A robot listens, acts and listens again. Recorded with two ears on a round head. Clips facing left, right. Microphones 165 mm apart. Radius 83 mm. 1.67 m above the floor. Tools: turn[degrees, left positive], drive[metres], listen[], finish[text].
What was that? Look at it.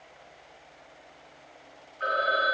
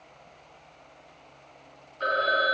Thought: The phone ringing: about 50° right or 130° right.
Action: turn[-50]
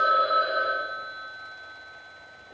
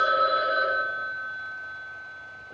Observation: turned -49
Thought: So it is at 75° right.
Action: turn[-75]
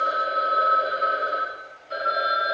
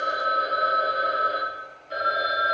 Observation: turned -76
Action: finish[Found it: a phone ringing, straight ahead.]